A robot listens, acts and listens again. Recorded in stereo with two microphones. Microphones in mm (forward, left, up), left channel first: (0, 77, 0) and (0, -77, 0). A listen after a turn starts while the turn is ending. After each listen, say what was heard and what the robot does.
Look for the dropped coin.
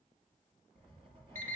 Keep listening.
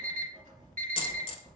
The dropped coin: about 40° left or 140° left. Turn 40° left.
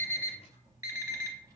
Keep listening.
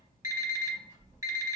I heard a dropped coin, but can't make it out now. It was about straight ahead or 100° left.